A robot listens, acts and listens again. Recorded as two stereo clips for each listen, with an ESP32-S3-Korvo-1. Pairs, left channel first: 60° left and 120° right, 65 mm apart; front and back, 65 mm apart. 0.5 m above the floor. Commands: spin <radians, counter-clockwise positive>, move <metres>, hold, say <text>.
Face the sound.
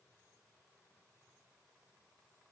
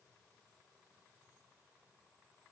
hold
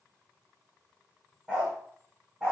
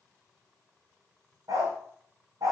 spin 2.88
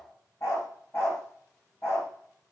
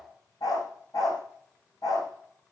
spin 0.26
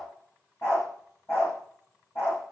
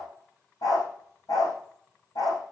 spin 0.17
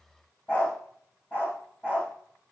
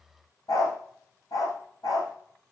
say Facing the dog barking, over 4 m away.